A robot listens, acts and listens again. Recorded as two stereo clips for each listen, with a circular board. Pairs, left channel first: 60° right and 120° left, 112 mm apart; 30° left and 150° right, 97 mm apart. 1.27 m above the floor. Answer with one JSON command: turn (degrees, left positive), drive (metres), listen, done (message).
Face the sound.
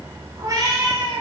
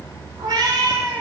{"turn": 165}
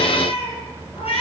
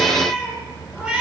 {"turn": -70}
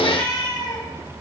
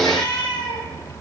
{"turn": -10}
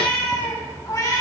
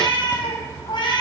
{"done": "Facing the cat meowing."}